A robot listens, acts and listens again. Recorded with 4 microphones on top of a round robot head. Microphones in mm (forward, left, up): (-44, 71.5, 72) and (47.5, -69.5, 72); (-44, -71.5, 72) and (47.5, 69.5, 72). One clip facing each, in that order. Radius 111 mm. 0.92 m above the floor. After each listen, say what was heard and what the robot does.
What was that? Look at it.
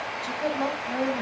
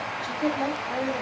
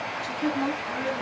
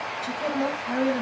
The woman speaking: 30° left. Turn 30° left.
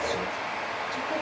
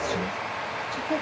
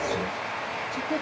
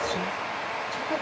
Keep listening.
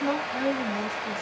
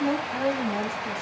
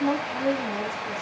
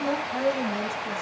Found it: a woman speaking, straight ahead, over 4 m away.